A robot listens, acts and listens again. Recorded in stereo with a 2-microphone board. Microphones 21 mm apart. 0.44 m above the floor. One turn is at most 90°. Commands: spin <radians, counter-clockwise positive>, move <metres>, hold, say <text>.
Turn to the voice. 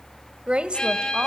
spin -1.13
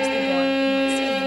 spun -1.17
hold
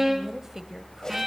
spin -0.44
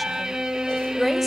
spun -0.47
say Facing the woman speaking, 1 to 2 m away.